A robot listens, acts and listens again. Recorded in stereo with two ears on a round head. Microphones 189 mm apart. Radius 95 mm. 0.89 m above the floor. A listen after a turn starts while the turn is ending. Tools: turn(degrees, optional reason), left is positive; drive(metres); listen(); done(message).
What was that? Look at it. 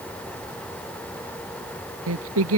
turn(degrees=-70, reason="The singing: about 70° right or 110° right.")
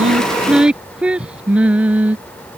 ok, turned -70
done("Found it: singing, straight ahead.")